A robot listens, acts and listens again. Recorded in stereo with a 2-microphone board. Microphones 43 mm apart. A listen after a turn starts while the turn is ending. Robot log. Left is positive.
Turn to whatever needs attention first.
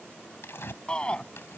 note: The shout: about 20° left or 160° left.
cmd yaw +20
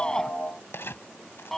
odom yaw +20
end: Facing the shout.